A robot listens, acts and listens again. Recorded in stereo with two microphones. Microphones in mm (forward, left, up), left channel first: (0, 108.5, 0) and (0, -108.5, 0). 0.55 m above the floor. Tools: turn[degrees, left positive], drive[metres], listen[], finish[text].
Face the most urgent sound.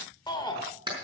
Thought: The shout: about 20° left or 160° left.
Action: turn[20]
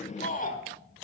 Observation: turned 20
Thought: So it is at 135° left.
Action: turn[135]
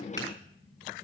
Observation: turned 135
Action: listen[]
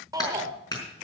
Thought: The shout is now 20° right.
Action: turn[-20]
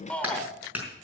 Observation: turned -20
Action: finish[Facing the shout, 1 to 2 m away.]